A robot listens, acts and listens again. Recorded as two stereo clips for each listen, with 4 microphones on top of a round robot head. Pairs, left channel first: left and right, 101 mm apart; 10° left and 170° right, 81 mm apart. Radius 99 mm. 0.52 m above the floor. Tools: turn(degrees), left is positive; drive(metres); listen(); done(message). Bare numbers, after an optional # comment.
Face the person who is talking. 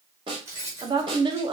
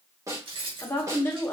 # The woman speaking: 55° right.
turn(-55)
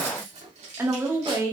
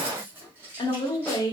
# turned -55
# The woman speaking is now 30° right.
turn(-30)
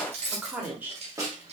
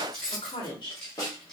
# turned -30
# The woman speaking is now 15° right.
turn(-15)
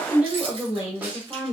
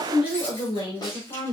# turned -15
# The woman speaking is now 15° right.
turn(-15)
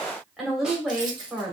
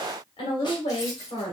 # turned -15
done("Facing the woman speaking.")